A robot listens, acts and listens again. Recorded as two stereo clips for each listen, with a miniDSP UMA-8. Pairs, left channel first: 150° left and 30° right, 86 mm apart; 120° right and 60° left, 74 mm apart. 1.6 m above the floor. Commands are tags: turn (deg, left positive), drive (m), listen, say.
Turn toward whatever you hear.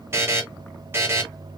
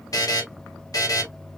<turn deg="-90"/>
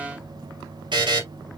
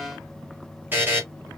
<say>Found it: a buzzer, straight ahead.</say>